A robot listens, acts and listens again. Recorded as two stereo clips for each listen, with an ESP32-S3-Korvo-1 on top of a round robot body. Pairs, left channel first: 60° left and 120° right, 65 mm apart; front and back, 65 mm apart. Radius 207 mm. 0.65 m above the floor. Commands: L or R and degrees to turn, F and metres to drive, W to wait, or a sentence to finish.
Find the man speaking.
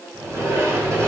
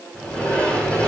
W
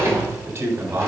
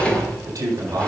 R155
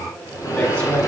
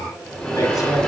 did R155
W
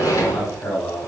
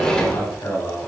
Found it: a man speaking, straight ahead.